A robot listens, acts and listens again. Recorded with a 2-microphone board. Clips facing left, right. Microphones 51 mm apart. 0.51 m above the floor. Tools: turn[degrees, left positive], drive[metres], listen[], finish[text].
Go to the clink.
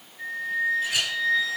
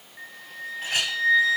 Thought: The clink: about 45° right or 135° right.
Action: turn[-45]
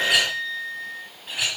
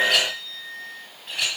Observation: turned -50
Action: drive[1.0]
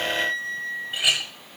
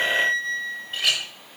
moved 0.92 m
Action: drive[1.0]
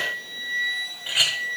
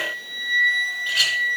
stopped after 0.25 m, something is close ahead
Thought: The clink is now 10° left.
Action: turn[10]
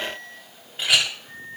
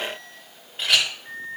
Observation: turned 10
Action: finish[I am next to the clink.]